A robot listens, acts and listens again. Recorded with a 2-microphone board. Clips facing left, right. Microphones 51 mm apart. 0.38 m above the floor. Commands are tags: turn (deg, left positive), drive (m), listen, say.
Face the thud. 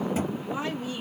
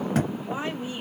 <turn deg="-90"/>
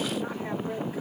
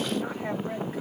<say>Facing where the thud came from. I can't hear it now.</say>